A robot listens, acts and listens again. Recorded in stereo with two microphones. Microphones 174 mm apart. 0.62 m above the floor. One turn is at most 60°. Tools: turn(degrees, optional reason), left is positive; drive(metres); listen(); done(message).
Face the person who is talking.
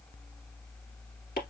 listen()
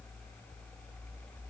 listen()
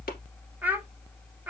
turn(degrees=-30)
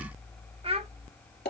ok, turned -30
turn(degrees=-60, reason="So it is at 140° right.")
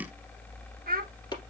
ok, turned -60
turn(degrees=-60, reason="The child speaking is now 75° right.")
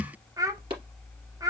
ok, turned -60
turn(degrees=-20, reason="The child speaking is now 20° right.")
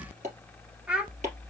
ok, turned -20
done("Found it: a child speaking, straight ahead.")